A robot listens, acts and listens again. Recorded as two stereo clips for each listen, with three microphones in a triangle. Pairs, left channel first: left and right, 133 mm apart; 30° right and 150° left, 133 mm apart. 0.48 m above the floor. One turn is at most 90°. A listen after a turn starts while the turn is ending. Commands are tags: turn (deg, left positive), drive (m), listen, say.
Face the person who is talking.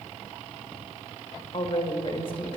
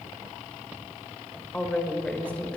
<turn deg="50"/>
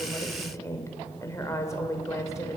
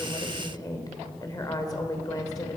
<turn deg="25"/>
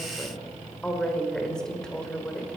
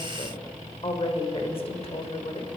<say>Found it: a woman speaking, straight ahead, 1 to 2 m away.</say>